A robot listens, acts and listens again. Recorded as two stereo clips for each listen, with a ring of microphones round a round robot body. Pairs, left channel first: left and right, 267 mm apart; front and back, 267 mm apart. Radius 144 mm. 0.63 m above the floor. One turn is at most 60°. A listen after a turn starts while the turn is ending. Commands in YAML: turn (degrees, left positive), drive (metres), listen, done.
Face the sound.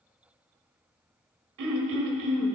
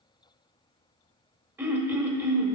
turn: -60
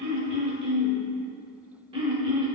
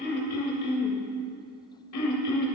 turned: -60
turn: -20
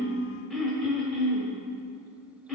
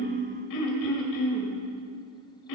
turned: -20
done: "Found it: throat clearing, straight ahead, 1 to 2 m away."